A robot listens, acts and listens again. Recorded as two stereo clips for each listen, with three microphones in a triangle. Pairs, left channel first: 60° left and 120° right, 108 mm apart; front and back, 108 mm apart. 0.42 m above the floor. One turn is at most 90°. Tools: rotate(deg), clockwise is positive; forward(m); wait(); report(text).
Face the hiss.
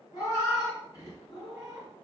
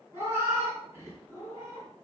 wait()
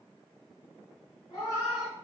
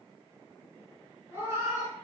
wait()
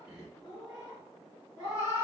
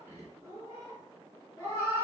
report("I can't make out a hiss, only a cat meowing.")